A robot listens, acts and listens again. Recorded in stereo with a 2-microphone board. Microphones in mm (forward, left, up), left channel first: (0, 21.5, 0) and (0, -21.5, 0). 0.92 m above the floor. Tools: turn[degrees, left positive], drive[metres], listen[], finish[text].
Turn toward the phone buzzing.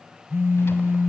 Thought: The phone buzzing: about 70° right or 110° right.
Action: turn[-70]
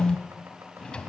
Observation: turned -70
Action: finish[Facing the phone buzzing, 1 to 2 m away.]